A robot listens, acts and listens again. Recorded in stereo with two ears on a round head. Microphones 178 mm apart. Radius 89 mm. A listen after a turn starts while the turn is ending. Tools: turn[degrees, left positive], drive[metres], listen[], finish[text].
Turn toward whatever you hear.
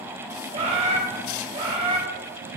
Thought: The bird: about 30° right or 150° right.
Action: turn[-30]
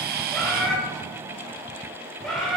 Action: finish[Found it: a bird, straight ahead.]